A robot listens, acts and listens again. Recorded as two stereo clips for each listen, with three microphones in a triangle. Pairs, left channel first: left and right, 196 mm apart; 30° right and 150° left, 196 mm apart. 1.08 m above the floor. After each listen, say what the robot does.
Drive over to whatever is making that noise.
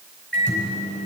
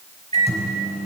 Turn 95° left.
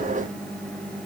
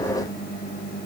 Drive 1.0 m forward.
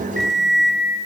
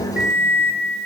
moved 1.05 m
Drive 1.0 m forward.
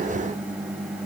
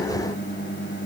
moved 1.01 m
Turn 10° right.
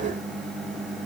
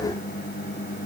Drive 1.0 m forward.
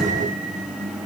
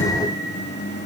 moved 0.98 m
Drive 1.0 m forward.
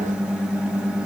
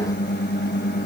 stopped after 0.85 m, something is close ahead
I am next to the microwave.